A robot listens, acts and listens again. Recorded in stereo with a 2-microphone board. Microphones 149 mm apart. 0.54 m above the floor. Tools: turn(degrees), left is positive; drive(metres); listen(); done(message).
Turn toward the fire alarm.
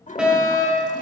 turn(degrees=-30)
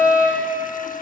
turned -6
turn(degrees=-30)
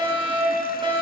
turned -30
turn(degrees=-135)
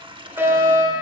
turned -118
turn(degrees=-20)
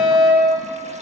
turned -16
done("Found it: a fire alarm, straight ahead.")